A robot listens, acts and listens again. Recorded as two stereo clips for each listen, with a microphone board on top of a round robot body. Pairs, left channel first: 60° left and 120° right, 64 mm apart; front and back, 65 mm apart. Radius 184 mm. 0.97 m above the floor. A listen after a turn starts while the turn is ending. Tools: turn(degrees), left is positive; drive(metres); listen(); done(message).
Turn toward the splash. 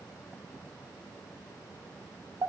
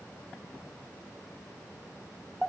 listen()
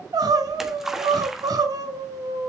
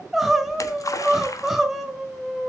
turn(degrees=-35)
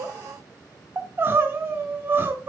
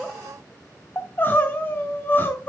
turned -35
done("Facing where the splash came from. I can't hear it now.")